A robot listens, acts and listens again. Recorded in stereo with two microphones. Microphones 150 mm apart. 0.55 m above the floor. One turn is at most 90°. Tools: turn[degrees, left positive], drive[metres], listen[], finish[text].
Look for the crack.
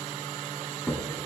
Action: turn[30]
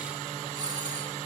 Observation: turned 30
Action: listen[]
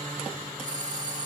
Action: finish[I heard a crack, but can't make it out now. It was about 20° right or 140° left.]